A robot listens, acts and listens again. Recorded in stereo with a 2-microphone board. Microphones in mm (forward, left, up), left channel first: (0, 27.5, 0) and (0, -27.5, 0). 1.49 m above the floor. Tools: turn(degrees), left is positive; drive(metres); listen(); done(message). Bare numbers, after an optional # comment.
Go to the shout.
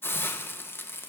listen()
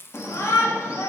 # The shout: about 60° left or 120° left.
turn(60)
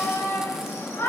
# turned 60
# So it is at 60° left.
turn(60)
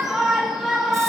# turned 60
drive(1.0)
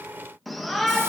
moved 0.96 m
drive(1.0)
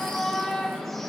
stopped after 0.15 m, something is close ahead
done("I am next to the shout.")